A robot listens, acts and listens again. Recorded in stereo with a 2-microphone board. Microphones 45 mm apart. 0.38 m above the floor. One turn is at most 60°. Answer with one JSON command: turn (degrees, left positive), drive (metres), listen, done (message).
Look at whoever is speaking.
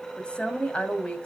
{"turn": 25}
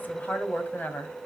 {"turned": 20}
{"turn": 60}
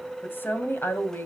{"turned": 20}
{"turn": 60}
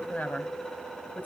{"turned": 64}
{"turn": 50}
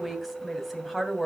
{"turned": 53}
{"done": "Facing the woman speaking, 2 to 4 m away."}